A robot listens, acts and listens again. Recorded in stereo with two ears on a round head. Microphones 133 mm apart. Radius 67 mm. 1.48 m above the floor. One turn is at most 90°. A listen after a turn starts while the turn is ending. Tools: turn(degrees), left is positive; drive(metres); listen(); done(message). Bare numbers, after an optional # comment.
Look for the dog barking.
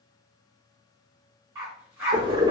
# The dog barking: about 20° right or 160° right.
turn(-20)
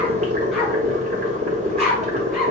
done("Facing the dog barking, 1 to 2 m away.")